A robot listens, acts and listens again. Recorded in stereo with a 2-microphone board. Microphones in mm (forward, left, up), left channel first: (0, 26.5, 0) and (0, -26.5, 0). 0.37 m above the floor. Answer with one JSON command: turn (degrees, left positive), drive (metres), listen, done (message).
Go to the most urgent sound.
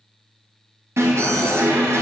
{"turn": -60}
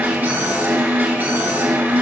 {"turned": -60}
{"turn": -45}
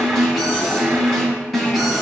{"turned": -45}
{"drive": 1.0}
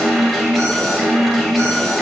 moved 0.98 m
{"drive": 1.0}
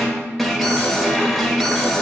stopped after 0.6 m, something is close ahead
{"done": "Arrived at the alarm, straight ahead."}